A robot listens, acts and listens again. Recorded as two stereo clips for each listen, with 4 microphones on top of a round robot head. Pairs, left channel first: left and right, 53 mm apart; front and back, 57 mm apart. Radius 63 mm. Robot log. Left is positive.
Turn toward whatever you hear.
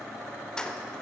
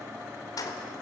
note: The keys jangling: 15° left.
cmd yaw +15
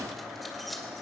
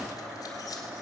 cmd idle
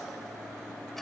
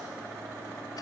cmd idle
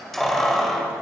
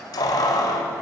end: Facing the keys jangling, 2 to 4 m away.